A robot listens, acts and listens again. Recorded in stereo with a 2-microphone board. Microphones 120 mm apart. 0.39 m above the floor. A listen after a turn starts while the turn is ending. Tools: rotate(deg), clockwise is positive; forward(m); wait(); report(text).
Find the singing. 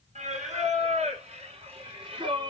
rotate(45)
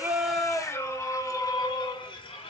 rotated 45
rotate(-50)
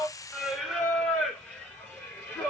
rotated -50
rotate(-15)
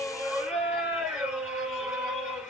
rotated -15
report("Found it: singing, straight ahead, 2 to 4 m away.")